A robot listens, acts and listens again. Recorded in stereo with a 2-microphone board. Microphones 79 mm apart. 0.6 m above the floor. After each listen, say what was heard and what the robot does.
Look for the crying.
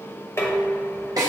Keep listening.
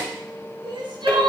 Turn 90° right.
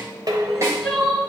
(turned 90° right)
Facing the crying, 1 to 2 m away.